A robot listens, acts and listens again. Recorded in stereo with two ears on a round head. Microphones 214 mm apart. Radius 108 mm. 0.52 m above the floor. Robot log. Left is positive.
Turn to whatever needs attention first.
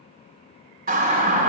note: The siren: about 40° right or 140° right.
cmd yaw -40
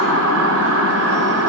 note: So it is at 95° right.
cmd yaw -95
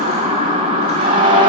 note: The siren is now 25° right.
cmd yaw -25
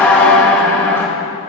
note: The siren is now 10° left.
cmd yaw +10
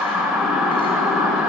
end: Found it: a siren, straight ahead, 2 to 4 m away.